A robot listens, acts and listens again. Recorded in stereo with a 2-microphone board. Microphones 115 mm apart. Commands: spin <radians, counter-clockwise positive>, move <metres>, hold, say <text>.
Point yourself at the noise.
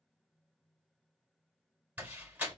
spin -0.26
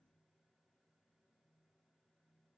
hold
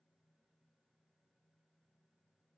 say I heard a door slam, but can't make it out now. It was about straight ahead or 150° right.